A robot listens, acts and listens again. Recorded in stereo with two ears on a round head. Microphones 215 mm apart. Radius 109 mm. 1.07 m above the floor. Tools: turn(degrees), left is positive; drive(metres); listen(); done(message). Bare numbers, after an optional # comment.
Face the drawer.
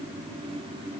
listen()
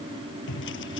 # The drawer: about 55° left or 125° left.
turn(55)
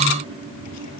listen()
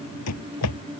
# So it is at 70° left.
turn(70)
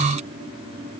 listen()
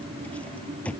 done("Found it: a drawer, straight ahead.")